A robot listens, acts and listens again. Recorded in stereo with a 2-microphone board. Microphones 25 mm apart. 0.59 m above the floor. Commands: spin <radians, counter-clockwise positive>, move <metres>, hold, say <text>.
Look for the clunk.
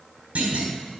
spin -1.22
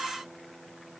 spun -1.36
hold
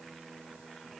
say I heard a clunk, but can't make it out now. It was about 10° left or 30° right.